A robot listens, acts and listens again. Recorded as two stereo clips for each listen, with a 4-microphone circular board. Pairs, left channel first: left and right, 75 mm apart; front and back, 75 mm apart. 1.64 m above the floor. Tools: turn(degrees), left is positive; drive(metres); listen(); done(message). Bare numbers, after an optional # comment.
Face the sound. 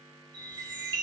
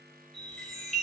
# The chime: 90° right.
turn(-90)
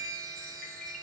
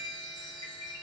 # The chime is now 10° left.
turn(10)
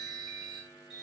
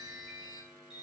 done("Found it: a chime, straight ahead.")